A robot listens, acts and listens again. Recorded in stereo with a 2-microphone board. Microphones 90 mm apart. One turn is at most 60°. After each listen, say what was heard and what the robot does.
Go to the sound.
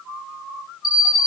The alarm clock: about 70° right or 110° right. Turn 60° right.
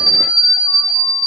So it is at 50° right. Turn 50° right.
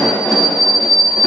Drive 1.0 m forward.
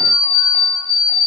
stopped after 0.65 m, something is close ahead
Blocked. The alarm clock is further on, straight ahead.